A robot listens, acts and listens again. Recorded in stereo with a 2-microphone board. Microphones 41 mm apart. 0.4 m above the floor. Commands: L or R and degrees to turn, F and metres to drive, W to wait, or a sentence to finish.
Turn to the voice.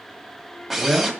R30
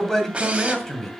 L15
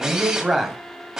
Found it: a man speaking, straight ahead.